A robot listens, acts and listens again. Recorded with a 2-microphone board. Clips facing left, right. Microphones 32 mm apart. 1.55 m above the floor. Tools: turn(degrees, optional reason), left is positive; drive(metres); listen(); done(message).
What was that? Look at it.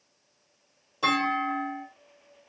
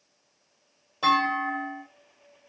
turn(degrees=-15, reason="The clunk: about 15° right or 165° right.")
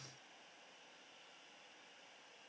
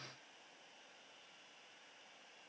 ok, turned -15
listen()
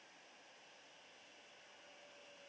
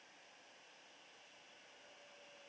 done("I heard a clunk, but can't make it out now. It was about straight ahead or 150° right.")